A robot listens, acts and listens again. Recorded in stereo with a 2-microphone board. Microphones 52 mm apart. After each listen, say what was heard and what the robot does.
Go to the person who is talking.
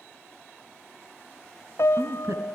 The woman speaking: about 70° right or 110° right. Turn 70° right.
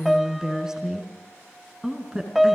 So it is at 15° right. Turn 15° right.
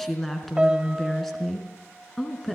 Drive 1.0 m forward.
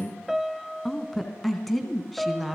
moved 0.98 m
Drive 1.0 m forward.
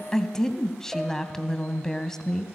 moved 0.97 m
The woman speaking is now 10° left. Turn 10° left.
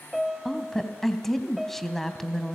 Drive 1.0 m forward.
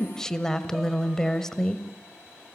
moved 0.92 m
The woman speaking is now 15° left. Turn 15° left.
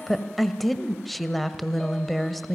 Drive 1.0 m forward.
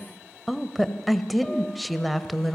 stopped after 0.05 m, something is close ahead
I am next to the woman speaking.